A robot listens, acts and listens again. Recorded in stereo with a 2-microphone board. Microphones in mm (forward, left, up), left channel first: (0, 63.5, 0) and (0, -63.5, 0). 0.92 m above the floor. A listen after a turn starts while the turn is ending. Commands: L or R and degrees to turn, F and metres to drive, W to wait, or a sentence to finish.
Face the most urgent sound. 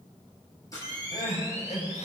L60
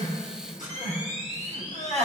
L60
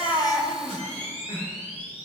L15
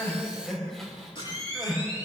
Found it: crying, straight ahead, 2 to 4 m away.